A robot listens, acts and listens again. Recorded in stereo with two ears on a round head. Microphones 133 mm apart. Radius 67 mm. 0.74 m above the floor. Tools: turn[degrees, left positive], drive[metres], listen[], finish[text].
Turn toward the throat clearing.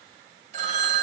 Action: listen[]
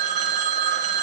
Action: listen[]
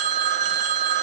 Action: finish[I can't make out throat clearing, only a phone ringing.]